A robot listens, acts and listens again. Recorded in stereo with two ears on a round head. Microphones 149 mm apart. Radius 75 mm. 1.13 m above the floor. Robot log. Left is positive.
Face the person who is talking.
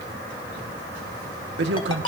cmd yaw -90
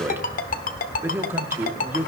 note: So it is at 15° right.
cmd yaw -15
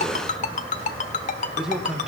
end: Facing the man speaking.